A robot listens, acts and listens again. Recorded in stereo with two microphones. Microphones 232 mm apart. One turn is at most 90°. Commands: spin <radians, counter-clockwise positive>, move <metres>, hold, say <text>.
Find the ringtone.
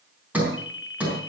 spin 1.05
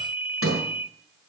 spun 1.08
spin 0.61
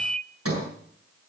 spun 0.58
say Found it: a ringtone, straight ahead.